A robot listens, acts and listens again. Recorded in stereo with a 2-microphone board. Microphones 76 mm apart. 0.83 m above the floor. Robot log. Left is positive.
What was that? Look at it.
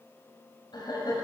note: The laughter: about 70° left or 110° left.
cmd yaw +70
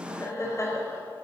note: So it is at 40° left.
cmd yaw +40
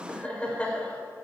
note: The laughter is now 15° left.
cmd yaw +15
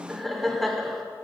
end: Found it: laughter, straight ahead, 2 to 4 m away.